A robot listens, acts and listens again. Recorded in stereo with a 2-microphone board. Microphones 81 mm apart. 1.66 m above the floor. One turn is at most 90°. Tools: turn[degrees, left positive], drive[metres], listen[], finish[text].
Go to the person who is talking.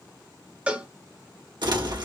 Action: listen[]
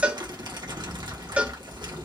Action: listen[]
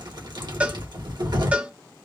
Action: finish[I can't make out anyone speaking, only crumpling and a cowbell.]